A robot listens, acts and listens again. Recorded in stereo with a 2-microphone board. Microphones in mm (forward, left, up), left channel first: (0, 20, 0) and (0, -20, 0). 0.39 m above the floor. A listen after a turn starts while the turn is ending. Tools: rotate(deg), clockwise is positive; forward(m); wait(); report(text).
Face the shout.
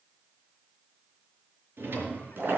wait()
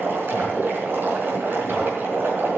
wait()
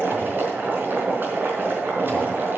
report("I can't make out a shout, only boiling and a drawer.")